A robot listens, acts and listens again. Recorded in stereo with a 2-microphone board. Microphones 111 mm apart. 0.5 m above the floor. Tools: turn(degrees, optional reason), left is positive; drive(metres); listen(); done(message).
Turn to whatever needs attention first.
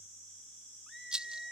turn(degrees=30)
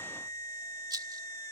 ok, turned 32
turn(degrees=145, reason="So it is at 145° left.")
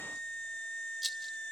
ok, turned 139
done("Found it: a scream, straight ahead.")